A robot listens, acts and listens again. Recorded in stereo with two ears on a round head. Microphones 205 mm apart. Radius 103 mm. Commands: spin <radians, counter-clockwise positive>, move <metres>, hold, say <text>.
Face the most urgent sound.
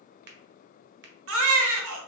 spin -1.13
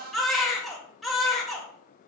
say Facing the baby crying, under 1 m away.